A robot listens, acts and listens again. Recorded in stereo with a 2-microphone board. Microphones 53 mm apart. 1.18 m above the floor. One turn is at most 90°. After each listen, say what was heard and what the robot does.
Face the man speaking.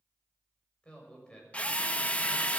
The man speaking: about 15° left or 165° left. Turn 15° left.
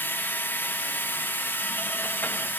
Keep listening.
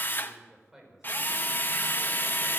So it is at 10° right. Turn 10° right.
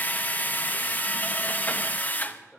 Keep listening.
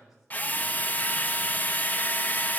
The man speaking is now 10° right. Turn 10° right.
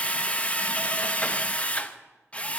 Keep listening.
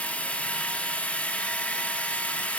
Keep listening.
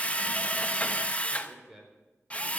Facing the man speaking, over 4 m away.